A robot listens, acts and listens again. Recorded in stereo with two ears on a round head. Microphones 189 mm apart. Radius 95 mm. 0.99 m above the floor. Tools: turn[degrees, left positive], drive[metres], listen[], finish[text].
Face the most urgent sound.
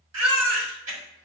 Thought: The baby crying: about 75° right or 105° right.
Action: turn[-75]
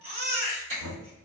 Thought: So it is at 30° right.
Action: turn[-30]
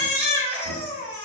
Action: finish[Facing the baby crying, 1 to 2 m away.]